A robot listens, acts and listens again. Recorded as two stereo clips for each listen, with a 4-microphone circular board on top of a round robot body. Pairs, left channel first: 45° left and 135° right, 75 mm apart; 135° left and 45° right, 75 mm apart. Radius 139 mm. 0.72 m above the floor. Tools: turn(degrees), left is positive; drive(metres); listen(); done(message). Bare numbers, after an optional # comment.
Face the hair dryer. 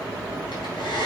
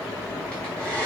# The hair dryer: 60° left.
turn(60)
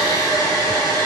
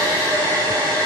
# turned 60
done("Found it: a hair dryer, straight ahead, over 4 m away.")